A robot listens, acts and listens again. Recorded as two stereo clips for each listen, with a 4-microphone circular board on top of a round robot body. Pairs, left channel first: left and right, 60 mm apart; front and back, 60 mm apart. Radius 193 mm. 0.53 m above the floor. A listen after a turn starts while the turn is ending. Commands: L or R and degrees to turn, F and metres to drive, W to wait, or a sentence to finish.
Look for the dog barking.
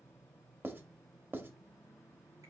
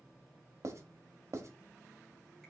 W
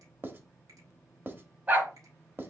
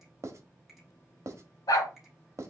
R30
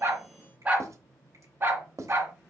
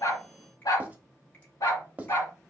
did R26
R45
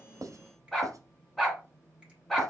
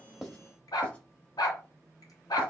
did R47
Facing the dog barking.